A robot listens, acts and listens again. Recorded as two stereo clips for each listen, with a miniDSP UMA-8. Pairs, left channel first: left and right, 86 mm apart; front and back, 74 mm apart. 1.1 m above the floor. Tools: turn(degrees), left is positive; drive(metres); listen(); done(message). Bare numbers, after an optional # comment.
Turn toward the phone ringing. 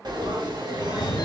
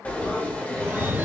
# The phone ringing: 120° left.
turn(120)
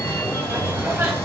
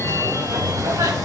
# The phone ringing is now 40° left.
turn(40)
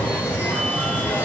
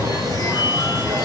# The phone ringing is now 15° right.
turn(-15)
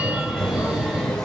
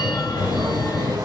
done("Facing the phone ringing, 2 to 4 m away.")